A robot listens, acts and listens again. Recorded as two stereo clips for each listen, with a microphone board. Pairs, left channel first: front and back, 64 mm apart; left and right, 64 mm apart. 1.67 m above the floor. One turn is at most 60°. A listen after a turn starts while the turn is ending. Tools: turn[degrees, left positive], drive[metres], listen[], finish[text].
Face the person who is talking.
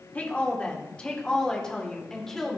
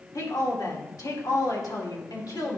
Thought: The woman speaking: 90° left.
Action: turn[60]
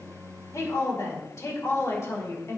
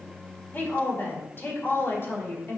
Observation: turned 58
Thought: The woman speaking is now 45° left.
Action: turn[45]
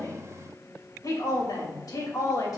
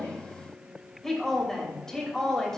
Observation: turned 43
Thought: The woman speaking is now 10° left.
Action: turn[10]
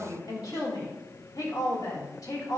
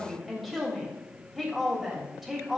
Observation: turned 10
Action: finish[Found it: a woman speaking, straight ahead.]